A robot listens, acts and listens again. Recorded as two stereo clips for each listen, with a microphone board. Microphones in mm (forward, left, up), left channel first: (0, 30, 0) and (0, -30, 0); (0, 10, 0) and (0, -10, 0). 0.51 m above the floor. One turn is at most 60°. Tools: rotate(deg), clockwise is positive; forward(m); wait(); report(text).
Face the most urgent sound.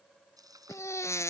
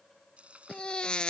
rotate(-50)
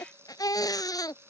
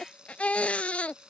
rotate(-60)
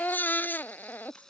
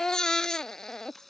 rotate(-30)
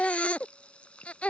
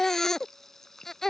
rotate(-20)
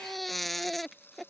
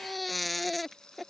report("Facing the baby crying.")